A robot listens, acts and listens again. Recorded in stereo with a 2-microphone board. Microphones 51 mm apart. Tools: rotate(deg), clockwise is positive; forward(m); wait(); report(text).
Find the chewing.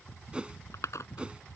rotate(-90)
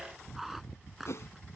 report("Found it: chewing, straight ahead.")